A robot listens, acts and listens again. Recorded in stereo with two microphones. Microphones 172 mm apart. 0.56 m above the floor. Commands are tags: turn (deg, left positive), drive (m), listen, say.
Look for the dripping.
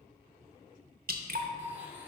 <turn deg="-65"/>
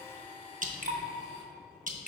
<turn deg="-50"/>
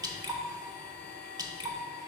<turn deg="-20"/>
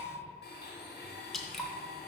<say>Found it: dripping, straight ahead, under 1 m away.</say>